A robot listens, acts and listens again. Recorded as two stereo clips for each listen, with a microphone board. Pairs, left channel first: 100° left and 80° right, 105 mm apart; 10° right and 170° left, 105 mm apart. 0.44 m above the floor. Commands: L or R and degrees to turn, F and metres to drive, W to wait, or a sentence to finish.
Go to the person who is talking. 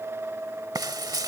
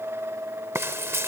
W
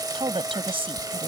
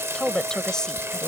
R95
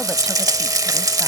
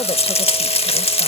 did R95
W
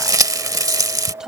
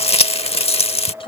F1.0
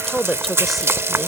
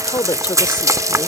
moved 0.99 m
L10
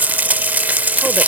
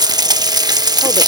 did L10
W
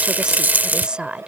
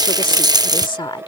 F1.0
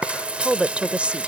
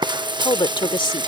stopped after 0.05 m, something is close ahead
I am next to the woman speaking.